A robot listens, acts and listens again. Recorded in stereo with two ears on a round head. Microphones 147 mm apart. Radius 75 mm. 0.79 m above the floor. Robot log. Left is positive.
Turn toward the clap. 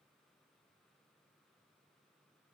cmd idle
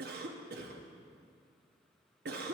cmd idle
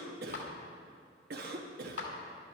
cmd yaw +90
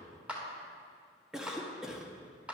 end: Facing the clap.